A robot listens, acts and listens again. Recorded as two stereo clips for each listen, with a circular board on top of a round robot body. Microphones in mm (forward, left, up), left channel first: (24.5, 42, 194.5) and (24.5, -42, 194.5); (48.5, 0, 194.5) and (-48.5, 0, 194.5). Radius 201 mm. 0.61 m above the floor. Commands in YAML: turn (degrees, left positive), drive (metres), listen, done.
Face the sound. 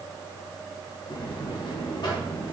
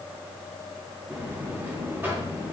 turn: 110
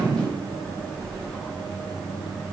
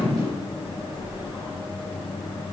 turn: 10
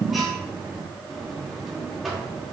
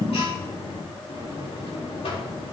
done: "Facing the buzzer, 2 to 4 m away."